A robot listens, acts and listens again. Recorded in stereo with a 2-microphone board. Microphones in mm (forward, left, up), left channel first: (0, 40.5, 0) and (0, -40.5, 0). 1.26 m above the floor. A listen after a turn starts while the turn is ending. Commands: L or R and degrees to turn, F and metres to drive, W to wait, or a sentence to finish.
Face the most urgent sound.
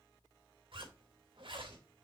W
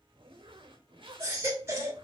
R30
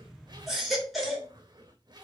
Found it: a baby crying, straight ahead, 2 to 4 m away.